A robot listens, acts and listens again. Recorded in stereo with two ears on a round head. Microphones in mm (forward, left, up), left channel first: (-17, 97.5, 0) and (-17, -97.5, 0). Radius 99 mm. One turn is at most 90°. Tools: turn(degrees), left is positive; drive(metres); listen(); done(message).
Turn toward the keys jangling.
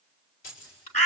turn(degrees=70)
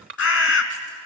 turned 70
listen()
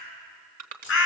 listen()
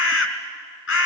done("I heard keys jangling, but can't make it out now. It was about straight ahead or 40° left.")